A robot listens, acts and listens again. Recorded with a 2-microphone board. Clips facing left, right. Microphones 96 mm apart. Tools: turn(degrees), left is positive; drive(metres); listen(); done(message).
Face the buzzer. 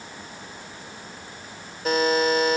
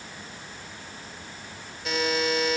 turn(degrees=45)
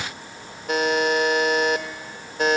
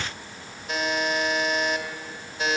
turn(degrees=80)
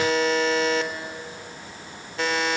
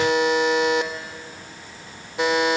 turn(degrees=-20)
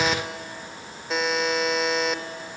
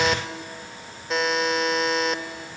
done("Facing the buzzer, 1 to 2 m away.")